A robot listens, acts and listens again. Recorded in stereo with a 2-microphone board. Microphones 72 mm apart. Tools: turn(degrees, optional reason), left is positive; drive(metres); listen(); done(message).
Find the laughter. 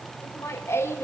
turn(degrees=40, reason="The laughter: about 40° left or 140° left.")
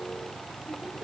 listen()
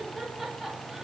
listen()
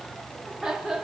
turn(degrees=-10, reason="So it is at 10° right.")
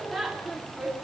done("Facing the laughter.")